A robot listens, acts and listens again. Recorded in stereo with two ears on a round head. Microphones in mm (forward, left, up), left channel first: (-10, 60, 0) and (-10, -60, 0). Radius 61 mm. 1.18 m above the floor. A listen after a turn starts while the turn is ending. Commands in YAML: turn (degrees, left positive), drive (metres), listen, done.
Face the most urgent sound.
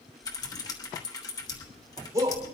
turn: -25
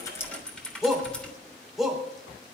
done: "Found it: a shout, straight ahead, 2 to 4 m away."